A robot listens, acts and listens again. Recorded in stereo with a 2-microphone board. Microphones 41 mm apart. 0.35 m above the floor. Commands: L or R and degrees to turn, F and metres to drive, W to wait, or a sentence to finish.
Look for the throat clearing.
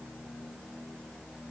W
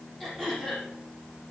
L30
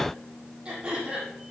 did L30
R25
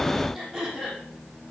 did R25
Found it: throat clearing, straight ahead, over 4 m away.